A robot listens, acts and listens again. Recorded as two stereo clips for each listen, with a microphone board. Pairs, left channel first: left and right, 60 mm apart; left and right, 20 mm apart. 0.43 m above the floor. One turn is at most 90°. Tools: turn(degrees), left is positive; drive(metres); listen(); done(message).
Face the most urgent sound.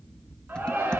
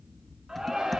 turn(degrees=-35)
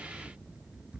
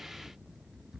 listen()
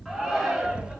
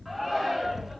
done("Facing the shout, over 4 m away.")